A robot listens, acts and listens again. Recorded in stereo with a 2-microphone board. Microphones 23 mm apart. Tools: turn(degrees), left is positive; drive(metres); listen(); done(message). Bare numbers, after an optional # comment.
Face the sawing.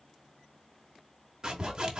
# The sawing: about 35° right or 145° right.
turn(-35)
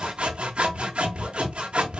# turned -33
# So it is at 105° right.
turn(-105)
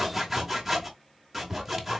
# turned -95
# The sawing is now 10° right.
turn(-10)
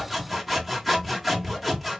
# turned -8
done("Found it: sawing, straight ahead, under 1 m away.")